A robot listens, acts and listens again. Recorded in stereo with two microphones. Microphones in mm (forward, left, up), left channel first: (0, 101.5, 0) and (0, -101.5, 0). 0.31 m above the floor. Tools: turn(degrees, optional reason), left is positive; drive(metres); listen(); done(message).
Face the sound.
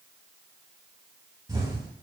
turn(degrees=-20, reason="The explosion: about 20° right or 160° right.")
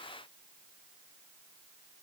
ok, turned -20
listen()
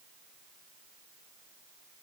done("I heard an explosion, but can't make it out now. It was about straight ahead or 140° right.")